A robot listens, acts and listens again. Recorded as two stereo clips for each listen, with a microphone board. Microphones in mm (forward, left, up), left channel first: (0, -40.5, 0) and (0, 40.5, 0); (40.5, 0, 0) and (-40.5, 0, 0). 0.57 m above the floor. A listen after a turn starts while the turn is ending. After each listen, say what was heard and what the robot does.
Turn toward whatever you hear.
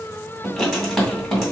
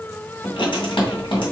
Facing the writing.